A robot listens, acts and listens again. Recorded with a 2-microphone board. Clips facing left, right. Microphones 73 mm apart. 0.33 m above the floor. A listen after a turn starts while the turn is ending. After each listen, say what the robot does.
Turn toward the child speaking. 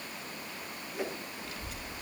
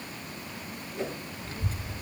Turn 35° right.
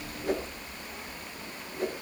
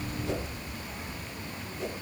Turn 10° right.
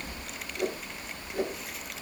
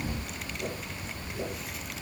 Facing the child speaking, under 1 m away.